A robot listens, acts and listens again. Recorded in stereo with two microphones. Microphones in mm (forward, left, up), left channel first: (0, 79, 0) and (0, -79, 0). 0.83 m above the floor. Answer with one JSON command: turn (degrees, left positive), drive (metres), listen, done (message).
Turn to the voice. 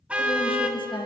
{"turn": 35}
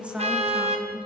{"turn": -10}
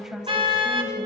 {"done": "Facing the woman speaking, 2 to 4 m away."}